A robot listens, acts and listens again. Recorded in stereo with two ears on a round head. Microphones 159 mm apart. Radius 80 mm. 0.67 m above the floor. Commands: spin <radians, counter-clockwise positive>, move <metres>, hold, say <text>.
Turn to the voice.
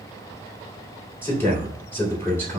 spin 0.52
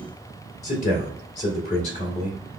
spin 2.27
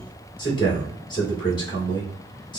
spin 0.52
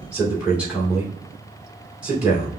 say Found it: a man speaking, straight ahead.